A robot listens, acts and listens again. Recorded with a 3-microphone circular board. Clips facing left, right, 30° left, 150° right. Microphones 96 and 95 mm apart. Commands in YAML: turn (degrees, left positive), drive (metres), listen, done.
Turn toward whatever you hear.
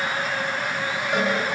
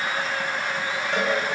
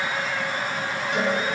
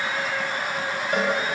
turn: 170
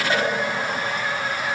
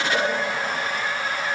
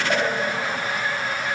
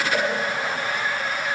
turn: 25
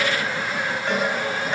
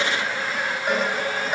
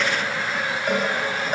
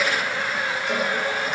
turn: -10
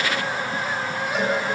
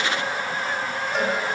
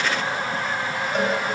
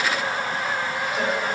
done: "Facing the cowbell, over 4 m away."